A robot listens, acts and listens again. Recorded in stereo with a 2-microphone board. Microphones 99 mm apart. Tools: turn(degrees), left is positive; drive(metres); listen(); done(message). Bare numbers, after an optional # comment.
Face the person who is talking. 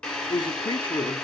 # The man speaking: about 50° left or 130° left.
turn(50)
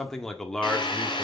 done("Found it: a man speaking, straight ahead.")